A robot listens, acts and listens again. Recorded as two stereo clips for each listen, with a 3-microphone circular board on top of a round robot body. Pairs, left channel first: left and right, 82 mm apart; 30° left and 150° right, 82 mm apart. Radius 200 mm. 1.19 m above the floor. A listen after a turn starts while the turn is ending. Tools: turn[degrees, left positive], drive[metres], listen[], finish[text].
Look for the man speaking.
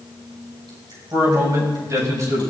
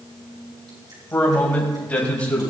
Thought: The man speaking: 40° right.
Action: turn[-40]
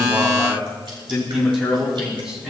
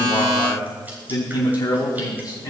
Thought: The man speaking is now 10° right.
Action: turn[-10]
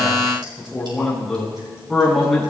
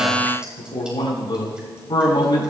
Action: finish[Found it: a man speaking, straight ahead.]